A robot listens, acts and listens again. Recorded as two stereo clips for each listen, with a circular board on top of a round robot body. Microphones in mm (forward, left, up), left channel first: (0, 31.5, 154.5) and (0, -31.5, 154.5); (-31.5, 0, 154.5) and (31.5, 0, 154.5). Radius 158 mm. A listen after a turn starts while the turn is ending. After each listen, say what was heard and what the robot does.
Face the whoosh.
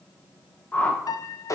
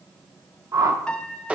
The whoosh: 25° left. Turn 25° left.
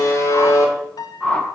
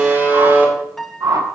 The whoosh is now 15° left. Turn 15° left.
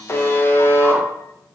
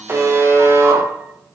Keep listening.
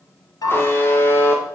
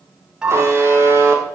Facing the whoosh.